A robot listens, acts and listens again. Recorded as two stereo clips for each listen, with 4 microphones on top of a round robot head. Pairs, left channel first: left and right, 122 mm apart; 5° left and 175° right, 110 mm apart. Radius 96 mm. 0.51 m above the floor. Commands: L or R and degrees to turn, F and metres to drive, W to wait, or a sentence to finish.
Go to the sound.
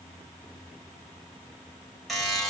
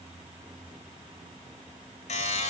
F1.0
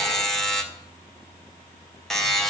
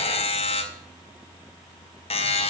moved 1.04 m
F1.0
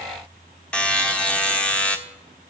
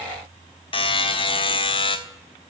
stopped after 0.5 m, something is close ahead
L10
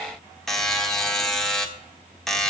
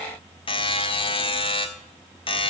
Arrived at the buzzer, straight ahead.